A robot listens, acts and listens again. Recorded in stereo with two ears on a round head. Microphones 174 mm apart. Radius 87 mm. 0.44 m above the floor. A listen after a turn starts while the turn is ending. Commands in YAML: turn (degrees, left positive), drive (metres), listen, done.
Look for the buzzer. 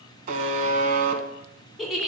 turn: -40
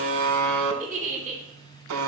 turn: -100
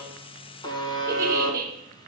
turn: 25
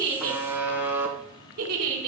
turn: -10
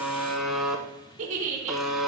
done: "Found it: a buzzer, straight ahead."